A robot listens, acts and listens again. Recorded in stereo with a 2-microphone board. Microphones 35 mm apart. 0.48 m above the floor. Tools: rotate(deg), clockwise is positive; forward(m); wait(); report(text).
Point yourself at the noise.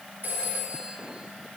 rotate(60)
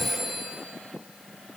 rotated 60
report("Found it: a phone ringing, straight ahead, over 4 m away.")